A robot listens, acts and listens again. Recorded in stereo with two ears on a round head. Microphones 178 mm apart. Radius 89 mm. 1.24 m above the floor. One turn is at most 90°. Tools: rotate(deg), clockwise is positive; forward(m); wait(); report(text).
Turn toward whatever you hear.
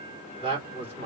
rotate(30)
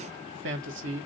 rotate(90)
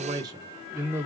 rotate(10)
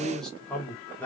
rotate(-10)
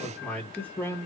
rotate(-10)
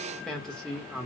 report("Found it: a man speaking, straight ahead.")